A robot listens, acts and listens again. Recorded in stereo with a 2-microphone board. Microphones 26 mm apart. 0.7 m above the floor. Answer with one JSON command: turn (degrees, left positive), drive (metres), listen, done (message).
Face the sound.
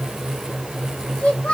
{"turn": 55}
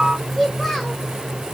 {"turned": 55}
{"done": "Found it: a child speaking, straight ahead."}